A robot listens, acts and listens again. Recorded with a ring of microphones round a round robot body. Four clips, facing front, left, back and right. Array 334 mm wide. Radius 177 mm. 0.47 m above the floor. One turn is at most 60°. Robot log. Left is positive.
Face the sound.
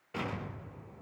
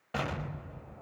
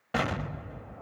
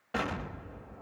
note: The explosion: straight behind.
cmd yaw +60
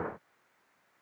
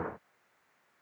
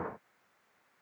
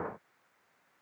note: Nothing new. It was at 120° left.
cmd yaw +60
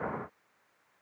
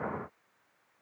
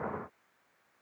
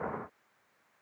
note: Nothing new. It was at 60° left.
cmd yaw +60
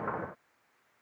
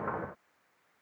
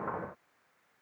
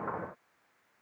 end: I heard an explosion from this way, but can't make it out now.